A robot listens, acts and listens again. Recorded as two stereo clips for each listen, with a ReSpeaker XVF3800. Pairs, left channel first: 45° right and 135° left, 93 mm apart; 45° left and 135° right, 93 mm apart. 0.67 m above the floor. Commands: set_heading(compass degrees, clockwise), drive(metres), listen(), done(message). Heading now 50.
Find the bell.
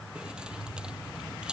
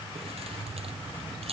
listen()
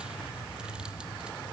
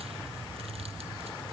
listen()
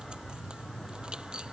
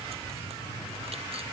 done("I can't make out a bell to turn to.")